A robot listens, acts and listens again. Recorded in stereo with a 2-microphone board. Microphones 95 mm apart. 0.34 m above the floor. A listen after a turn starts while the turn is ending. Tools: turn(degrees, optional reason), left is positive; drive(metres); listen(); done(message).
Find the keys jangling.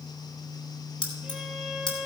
turn(degrees=50, reason="The keys jangling: about 50° left or 130° left.")
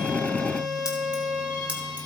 listen()
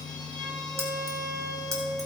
turn(degrees=-35, reason="So it is at 35° right.")
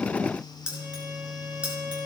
turn(degrees=-10, reason="The keys jangling is now 10° right.")
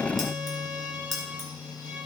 done("Found it: keys jangling, straight ahead.")